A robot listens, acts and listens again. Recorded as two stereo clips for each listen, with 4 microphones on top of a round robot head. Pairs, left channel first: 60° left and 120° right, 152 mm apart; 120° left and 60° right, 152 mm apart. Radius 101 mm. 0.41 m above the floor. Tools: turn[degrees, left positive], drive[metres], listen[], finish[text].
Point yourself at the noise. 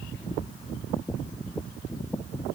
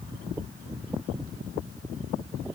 Action: listen[]
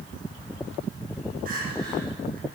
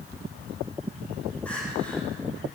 Thought: The crying: 155° right.
Action: turn[-155]
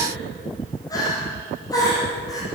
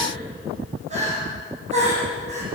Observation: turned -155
Thought: The crying is now 10° right.
Action: turn[-10]
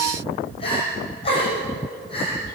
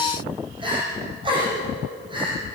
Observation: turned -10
Action: finish[Facing the crying.]